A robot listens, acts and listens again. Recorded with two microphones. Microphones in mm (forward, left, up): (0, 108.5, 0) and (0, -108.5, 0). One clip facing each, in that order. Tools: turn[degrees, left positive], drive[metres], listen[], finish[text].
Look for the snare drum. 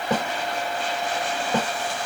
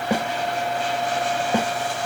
Action: turn[-30]
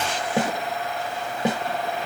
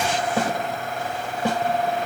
Thought: So it is at 20° left.
Action: turn[20]
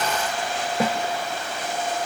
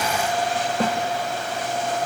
Thought: The snare drum is now 10° left.
Action: turn[10]
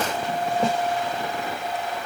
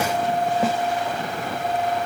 Action: finish[Facing the snare drum.]